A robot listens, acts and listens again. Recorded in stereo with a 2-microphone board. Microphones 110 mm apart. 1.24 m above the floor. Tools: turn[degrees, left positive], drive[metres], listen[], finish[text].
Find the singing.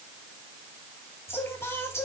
Thought: The singing: about 25° left or 155° left.
Action: turn[25]
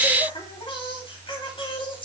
Thought: So it is at 130° left.
Action: turn[130]
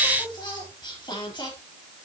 Thought: The singing is now 40° left.
Action: turn[40]
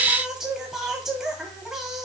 Action: finish[Found it: singing, straight ahead, 2 to 4 m away.]